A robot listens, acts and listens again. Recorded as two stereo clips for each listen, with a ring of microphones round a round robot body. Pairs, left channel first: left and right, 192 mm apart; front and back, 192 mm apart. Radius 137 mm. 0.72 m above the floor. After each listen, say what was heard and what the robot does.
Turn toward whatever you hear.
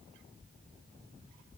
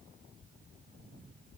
Keep listening.
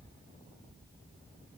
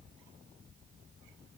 Keep listening.
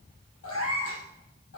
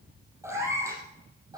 The cat meowing: 110° left. Turn 110° left.
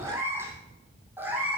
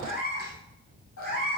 The cat meowing is now 10° right. Turn 10° right.
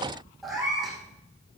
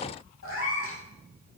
Found it: a cat meowing, straight ahead.